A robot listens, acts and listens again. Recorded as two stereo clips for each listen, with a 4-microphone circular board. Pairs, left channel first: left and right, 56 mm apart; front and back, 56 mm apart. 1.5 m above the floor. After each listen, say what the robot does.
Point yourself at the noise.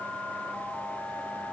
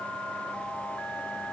Keep listening.
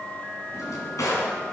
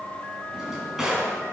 Turn 100° left.
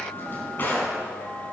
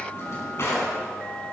Turn 40° left.
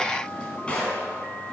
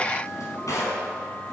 Turn 20° left.
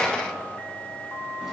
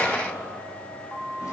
Keep listening.
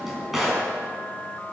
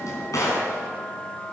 Found it: a drawer, straight ahead, 2 to 4 m away.